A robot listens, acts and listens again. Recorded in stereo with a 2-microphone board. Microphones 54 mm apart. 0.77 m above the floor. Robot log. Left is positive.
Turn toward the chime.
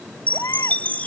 note: The chime: about 30° left or 150° left.
cmd yaw +30
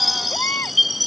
end: Facing the chime.